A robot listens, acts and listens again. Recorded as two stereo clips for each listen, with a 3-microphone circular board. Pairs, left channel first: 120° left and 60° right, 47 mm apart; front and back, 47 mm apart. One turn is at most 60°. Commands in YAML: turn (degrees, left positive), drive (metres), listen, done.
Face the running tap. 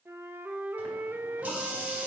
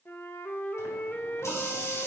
done: "Facing the running tap, 2 to 4 m away."